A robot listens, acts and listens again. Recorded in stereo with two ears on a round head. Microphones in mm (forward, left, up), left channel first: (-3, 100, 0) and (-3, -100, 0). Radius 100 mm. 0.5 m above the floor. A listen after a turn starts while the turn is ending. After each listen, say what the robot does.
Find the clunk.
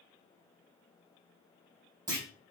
Turn 20° right.
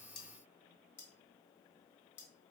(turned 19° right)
Keep listening.
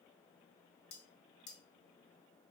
I heard a clunk, but can't make it out now. It was about straight ahead or 145° right.